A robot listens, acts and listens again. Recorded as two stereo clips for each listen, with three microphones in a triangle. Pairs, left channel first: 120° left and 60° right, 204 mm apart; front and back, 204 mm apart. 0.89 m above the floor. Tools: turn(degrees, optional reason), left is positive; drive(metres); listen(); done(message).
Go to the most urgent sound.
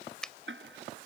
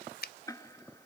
listen()
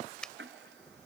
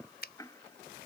listen()
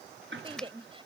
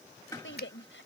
drive(metres=1.0)
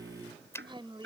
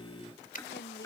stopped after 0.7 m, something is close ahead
listen()
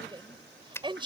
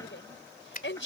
done("Blocked. The shout is further on, straight ahead.")